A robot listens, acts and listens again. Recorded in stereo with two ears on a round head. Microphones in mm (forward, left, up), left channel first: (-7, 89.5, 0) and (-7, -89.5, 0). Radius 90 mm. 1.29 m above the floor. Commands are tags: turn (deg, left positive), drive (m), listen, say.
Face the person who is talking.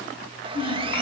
<turn deg="60"/>
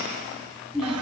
<say>Facing the child speaking, over 4 m away.</say>